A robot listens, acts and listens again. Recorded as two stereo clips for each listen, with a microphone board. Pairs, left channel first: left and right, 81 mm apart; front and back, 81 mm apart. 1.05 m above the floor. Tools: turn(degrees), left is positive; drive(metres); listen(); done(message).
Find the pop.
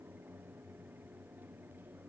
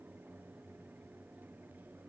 listen()
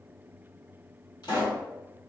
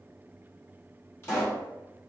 turn(degrees=60)
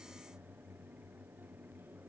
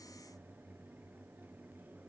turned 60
done("Facing where the pop came from. I can't hear it now.")